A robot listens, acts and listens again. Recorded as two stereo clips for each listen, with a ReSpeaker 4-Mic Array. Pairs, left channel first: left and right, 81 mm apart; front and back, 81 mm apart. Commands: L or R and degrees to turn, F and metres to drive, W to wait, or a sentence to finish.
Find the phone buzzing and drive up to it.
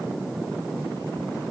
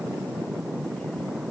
W
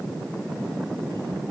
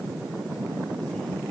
W
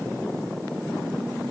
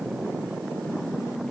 I can't make out a phone buzzing to turn to.